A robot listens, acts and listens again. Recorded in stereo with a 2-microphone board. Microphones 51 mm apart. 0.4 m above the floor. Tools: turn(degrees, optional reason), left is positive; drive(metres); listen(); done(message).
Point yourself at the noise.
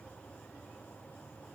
listen()
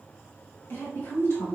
turn(degrees=65, reason="The woman speaking: about 65° left or 115° left.")
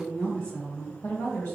turn(degrees=35, reason="So it is at 35° left.")
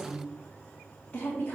turn(degrees=30, reason="The woman speaking is now 30° left.")
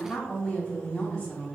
done("Found it: a woman speaking, straight ahead, 1 to 2 m away.")